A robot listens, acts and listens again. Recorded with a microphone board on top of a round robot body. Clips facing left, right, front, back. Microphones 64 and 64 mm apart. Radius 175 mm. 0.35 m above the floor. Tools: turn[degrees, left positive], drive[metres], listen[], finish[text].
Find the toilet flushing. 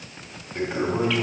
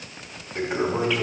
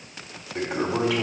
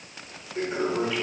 Thought: The toilet flushing: 10° right.
Action: turn[-10]
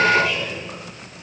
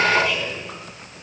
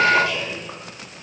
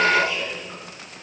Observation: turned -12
Action: finish[Found it: a toilet flushing, straight ahead.]